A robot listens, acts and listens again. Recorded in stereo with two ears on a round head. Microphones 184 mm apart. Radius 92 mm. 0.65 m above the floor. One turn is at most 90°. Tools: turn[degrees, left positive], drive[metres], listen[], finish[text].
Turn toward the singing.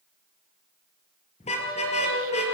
Thought: The singing: about 75° right or 105° right.
Action: turn[-75]
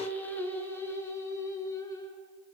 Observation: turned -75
Thought: So it is at 15° left.
Action: turn[15]
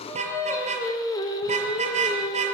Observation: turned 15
Thought: The singing is now 20° left.
Action: turn[20]
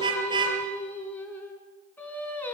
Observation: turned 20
Thought: The singing is now 10° left.
Action: turn[10]
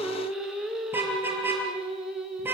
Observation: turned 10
Action: finish[Found it: singing, straight ahead.]